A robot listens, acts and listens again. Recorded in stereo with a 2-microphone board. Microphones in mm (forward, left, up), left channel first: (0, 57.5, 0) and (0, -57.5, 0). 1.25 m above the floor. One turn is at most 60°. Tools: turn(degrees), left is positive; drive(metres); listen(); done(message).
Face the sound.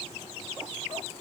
listen()
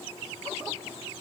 listen()
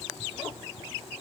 done("I can't make out anything to turn to.")